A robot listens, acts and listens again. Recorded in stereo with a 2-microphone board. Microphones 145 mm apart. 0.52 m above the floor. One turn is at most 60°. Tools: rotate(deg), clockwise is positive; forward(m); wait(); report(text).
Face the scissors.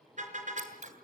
rotate(60)
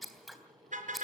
report("Facing the scissors.")